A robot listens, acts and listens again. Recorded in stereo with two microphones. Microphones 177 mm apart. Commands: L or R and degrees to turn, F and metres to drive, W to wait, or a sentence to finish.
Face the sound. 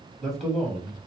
L30
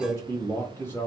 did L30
L30
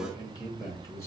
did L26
L165
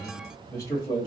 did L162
L25
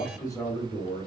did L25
L25
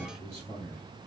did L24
L10
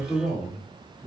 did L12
Facing the man speaking, 1 to 2 m away.